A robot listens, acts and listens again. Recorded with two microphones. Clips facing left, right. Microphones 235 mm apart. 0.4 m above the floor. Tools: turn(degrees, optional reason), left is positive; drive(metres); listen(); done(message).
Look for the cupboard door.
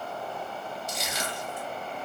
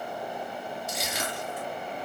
listen()
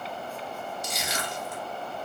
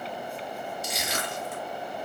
listen()
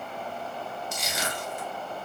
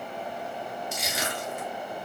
done("I can't make out a cupboard door to turn to.")